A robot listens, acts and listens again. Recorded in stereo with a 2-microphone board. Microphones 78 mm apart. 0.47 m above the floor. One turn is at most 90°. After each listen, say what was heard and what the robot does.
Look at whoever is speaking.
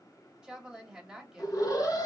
Turn 30° right.
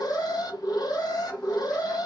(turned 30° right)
Keep listening.
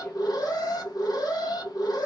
Keep listening.
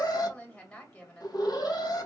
So it is at 15° left. Turn 15° left.
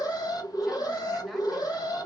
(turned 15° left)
Keep listening.
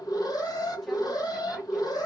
Keep listening.
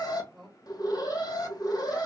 Found it: a woman speaking, straight ahead, 1 to 2 m away.